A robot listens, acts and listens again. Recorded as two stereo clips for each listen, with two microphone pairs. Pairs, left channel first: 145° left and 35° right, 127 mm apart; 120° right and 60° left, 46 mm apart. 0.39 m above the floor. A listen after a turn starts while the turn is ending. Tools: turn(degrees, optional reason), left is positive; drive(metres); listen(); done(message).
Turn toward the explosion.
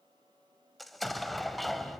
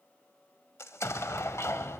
turn(degrees=-130, reason="The explosion: 130° right.")
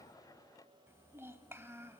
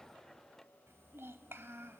done("Facing where the explosion came from. I can't hear it now.")